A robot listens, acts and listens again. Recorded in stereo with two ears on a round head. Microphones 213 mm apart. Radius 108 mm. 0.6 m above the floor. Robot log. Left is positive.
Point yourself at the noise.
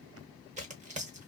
note: The tearing paper: about 30° right or 150° right.
cmd yaw -30
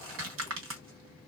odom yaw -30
note: So it is at 120° right.
cmd yaw -120
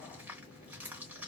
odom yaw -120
end: Facing the tearing paper, 1 to 2 m away.